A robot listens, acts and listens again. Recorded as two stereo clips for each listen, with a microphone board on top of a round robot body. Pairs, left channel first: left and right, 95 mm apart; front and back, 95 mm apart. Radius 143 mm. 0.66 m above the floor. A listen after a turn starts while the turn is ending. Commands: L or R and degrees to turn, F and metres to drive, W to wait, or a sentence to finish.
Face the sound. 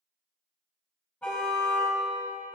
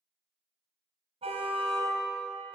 L165
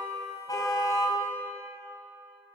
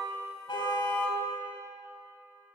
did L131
L35
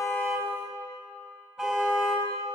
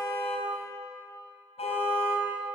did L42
Facing the car horn, over 4 m away.